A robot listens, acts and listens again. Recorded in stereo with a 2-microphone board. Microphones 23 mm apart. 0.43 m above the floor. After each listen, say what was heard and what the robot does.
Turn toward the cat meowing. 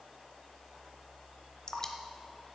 Keep listening.
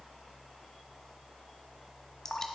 Keep listening.
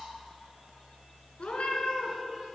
The cat meowing: about 70° left or 110° left. Turn 70° left.
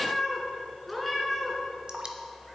Found it: a cat meowing, straight ahead.